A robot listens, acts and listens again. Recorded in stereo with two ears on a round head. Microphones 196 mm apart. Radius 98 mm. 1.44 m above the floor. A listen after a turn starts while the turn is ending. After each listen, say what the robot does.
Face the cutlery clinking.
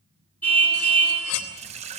Turn 90° left.
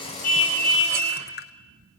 Keep listening.
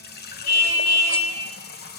Keep listening.
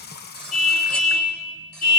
Facing where the cutlery clinking came from. I can't hear it now.